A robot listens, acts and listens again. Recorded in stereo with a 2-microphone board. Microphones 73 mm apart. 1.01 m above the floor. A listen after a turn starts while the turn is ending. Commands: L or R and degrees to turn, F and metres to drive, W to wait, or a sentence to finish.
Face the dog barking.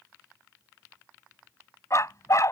L45
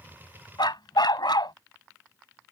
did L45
L90
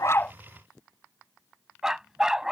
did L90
R10
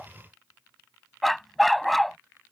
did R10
Facing the dog barking.